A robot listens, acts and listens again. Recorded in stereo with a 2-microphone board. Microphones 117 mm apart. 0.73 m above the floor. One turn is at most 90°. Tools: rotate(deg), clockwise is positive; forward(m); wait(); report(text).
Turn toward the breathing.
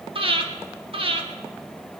rotate(50)
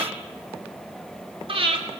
rotate(65)
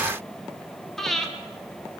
report("Facing the breathing, 1 to 2 m away.")